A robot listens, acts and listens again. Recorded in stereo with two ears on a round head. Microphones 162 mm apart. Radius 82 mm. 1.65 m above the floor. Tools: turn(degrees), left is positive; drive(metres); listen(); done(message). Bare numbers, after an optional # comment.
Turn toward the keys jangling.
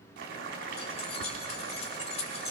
# The keys jangling: about 35° left or 145° left.
turn(35)
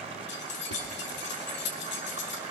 # So it is at 105° left.
turn(105)
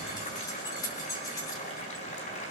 # The keys jangling is now 20° left.
turn(20)
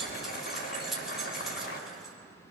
done("Found it: keys jangling, straight ahead.")